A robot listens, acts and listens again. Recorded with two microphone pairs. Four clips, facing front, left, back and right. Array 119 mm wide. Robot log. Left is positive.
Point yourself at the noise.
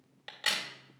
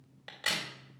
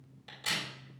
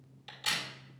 note: The crack: 45° left.
cmd yaw +45
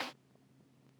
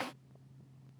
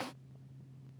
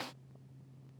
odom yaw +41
end: Facing where the crack came from. I can't hear it now.